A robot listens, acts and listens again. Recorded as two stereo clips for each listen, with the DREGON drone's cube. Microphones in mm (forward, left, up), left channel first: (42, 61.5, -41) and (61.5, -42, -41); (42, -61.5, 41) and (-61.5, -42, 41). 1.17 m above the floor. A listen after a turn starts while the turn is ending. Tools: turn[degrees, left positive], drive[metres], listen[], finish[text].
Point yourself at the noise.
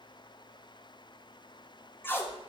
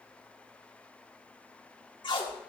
Thought: The tape being pulled: 30° left.
Action: turn[30]
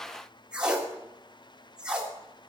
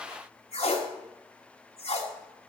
Action: finish[Found it: tape being pulled, straight ahead, 1 to 2 m away.]